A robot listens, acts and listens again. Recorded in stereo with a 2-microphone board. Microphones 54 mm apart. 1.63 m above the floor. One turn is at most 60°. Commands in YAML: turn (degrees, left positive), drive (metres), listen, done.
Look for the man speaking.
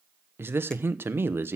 turn: -40
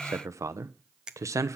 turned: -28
turn: -60
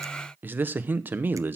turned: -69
turn: -40
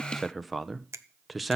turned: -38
done: "Found it: a man speaking, straight ahead, under 1 m away."